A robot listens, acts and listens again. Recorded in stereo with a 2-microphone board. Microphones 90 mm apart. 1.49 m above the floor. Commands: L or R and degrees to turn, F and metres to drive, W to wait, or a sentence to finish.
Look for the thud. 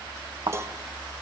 R65
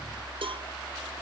W
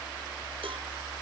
I heard a thud, but can't make it out now. It was about straight ahead or 50° right.